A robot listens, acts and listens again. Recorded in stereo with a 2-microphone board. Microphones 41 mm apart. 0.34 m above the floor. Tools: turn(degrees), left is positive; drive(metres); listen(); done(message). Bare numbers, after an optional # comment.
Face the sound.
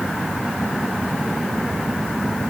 listen()
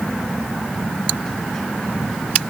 listen()
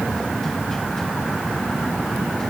done("I can't make out anything to turn to.")